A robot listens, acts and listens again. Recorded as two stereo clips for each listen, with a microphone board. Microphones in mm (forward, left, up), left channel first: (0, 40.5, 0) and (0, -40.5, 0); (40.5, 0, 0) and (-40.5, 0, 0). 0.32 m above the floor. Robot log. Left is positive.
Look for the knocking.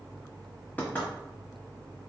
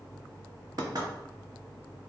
note: The knocking: 155° left.
cmd yaw +155
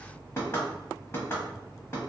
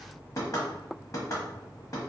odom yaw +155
note: The knocking is now 40° left.
cmd yaw +40
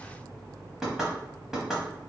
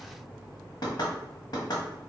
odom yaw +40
note: The knocking is now 10° right.
cmd yaw -10
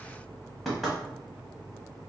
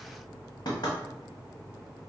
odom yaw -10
end: Found it: knocking, straight ahead.